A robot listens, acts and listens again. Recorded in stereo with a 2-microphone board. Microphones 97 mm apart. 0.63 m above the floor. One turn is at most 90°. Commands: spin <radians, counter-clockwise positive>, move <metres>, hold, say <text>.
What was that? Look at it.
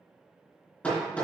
spin 0.52
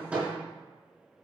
spin -0.17
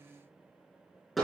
say Found it: hammering, straight ahead.